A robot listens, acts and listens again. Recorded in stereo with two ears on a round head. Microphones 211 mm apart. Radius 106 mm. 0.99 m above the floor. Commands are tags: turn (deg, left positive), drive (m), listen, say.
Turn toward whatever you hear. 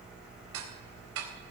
<turn deg="-65"/>
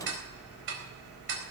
<turn deg="-50"/>
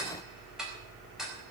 <say>Facing the ticking, over 4 m away.</say>